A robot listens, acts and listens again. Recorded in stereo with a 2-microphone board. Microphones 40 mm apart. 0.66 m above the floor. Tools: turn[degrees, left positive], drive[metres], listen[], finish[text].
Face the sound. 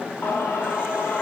Thought: The singing: about 70° left or 110° left.
Action: turn[70]
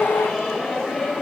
Thought: So it is at 10° left.
Action: turn[10]
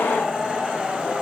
Thought: The singing is now 10° right.
Action: turn[-10]
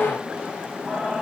Action: finish[Facing the singing, over 4 m away.]